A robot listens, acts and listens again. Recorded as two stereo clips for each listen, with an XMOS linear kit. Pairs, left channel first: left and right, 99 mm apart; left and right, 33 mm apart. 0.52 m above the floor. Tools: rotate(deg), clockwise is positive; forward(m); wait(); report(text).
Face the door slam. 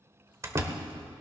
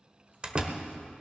rotate(30)
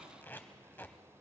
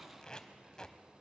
wait()
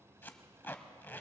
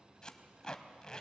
report("I heard a door slam, but can't make it out now. It was about straight ahead or 120° right.")